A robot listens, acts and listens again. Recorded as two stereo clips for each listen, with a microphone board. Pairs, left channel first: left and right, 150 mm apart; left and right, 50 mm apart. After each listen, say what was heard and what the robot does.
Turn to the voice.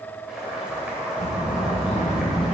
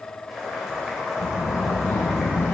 The child speaking: about 45° left or 135° left. Turn 45° left.
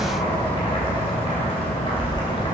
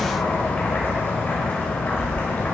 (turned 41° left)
So it is at 95° left. Turn 95° left.
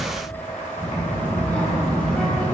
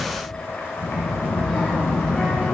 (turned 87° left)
The child speaking is now 10° left. Turn 10° left.
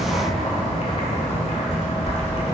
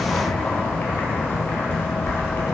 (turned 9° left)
Found it: a child speaking, straight ahead.